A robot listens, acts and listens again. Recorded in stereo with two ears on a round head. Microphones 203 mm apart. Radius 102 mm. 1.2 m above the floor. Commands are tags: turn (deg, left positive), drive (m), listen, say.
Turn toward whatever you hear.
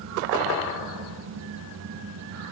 <listen/>
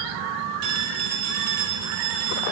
<turn deg="-90"/>
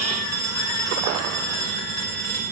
<turn deg="-15"/>
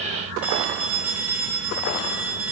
<say>Facing the phone ringing, 2 to 4 m away.</say>